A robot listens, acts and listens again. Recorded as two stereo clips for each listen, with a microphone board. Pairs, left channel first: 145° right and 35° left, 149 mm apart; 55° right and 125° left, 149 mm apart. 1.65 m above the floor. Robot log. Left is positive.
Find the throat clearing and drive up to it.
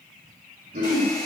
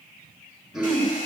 note: The throat clearing: 40° left.
cmd yaw +40
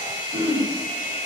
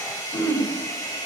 cmd fwd 1.0
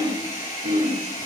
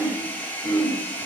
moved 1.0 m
cmd fwd 1.0
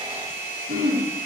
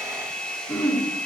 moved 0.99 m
note: The throat clearing is now 10° left.
cmd yaw +10
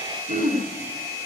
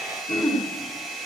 cmd fwd 1.0
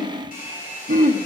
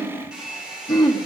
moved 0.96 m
cmd fwd 1.0
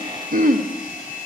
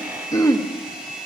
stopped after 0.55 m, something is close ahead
note: The throat clearing is now 10° left.
cmd yaw +10
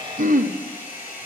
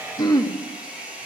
end: Arrived at the throat clearing, straight ahead.